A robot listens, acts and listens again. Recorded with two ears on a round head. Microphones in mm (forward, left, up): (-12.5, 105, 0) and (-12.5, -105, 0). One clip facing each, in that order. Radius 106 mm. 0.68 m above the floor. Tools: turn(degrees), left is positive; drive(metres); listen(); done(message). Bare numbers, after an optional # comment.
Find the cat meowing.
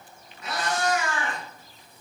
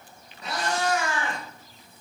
# The cat meowing: about 25° right or 155° right.
turn(-25)
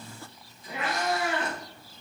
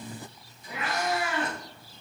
# So it is at 135° right.
turn(-135)
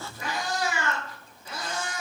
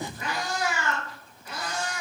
# The cat meowing is now 20° left.
turn(20)
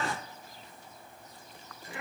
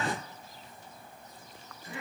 done("Found it: a cat meowing, straight ahead.")